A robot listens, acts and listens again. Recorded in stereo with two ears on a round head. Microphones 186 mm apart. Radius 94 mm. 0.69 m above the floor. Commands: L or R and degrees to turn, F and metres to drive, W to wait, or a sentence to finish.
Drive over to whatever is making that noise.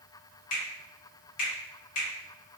L35
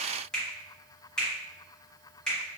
F1.0
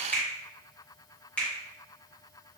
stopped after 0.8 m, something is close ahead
L10
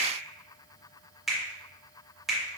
Arrived at the finger snap, straight ahead.